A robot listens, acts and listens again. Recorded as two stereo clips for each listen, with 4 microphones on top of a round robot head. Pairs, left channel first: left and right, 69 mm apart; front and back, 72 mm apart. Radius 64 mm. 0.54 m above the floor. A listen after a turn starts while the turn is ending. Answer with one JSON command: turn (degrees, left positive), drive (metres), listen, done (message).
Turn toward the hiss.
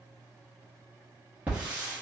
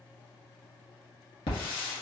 {"turn": -15}
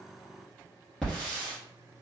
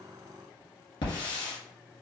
{"done": "Facing the hiss, 1 to 2 m away."}